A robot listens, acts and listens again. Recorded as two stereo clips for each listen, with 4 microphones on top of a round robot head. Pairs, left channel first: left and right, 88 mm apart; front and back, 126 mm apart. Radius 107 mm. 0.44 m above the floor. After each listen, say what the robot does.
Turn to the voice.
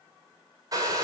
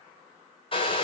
Keep listening.
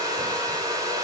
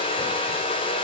Keep listening.
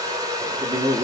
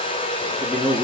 Turn 80° right.
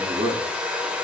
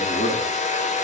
Turn 45° right.
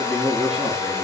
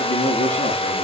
Facing the man speaking.